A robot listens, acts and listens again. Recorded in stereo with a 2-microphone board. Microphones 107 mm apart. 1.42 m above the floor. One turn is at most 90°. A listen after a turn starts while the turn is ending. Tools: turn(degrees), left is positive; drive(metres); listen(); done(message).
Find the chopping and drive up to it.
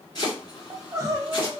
turn(degrees=45)
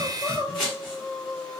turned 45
drive(metres=1.0)
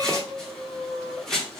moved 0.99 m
drive(metres=1.0)
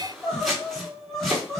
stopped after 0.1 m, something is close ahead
done("Arrived at the chopping, straight ahead.")